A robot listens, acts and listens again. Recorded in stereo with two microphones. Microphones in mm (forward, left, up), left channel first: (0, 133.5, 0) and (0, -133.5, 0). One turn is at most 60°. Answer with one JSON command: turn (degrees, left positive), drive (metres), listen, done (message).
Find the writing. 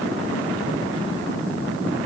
{"listen": true}
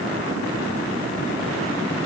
{"listen": true}
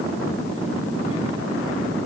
{"done": "I can't make out writing."}